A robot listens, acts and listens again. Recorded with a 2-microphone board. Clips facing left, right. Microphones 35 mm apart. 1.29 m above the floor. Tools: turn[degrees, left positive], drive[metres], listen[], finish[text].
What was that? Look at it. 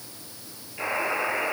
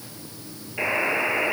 Thought: The buzzer: about 35° right or 145° right.
Action: turn[-35]
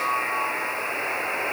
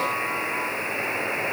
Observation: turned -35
Action: finish[Facing the buzzer.]